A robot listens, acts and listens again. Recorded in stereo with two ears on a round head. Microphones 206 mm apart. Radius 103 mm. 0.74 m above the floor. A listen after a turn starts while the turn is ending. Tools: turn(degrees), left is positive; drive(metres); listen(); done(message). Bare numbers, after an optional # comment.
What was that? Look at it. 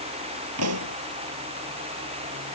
# The pop: about 70° right or 110° right.
turn(-70)
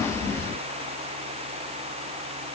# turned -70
listen()
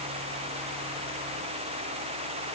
done("I heard a pop, but can't make it out now. It was about straight ahead or 40° right.")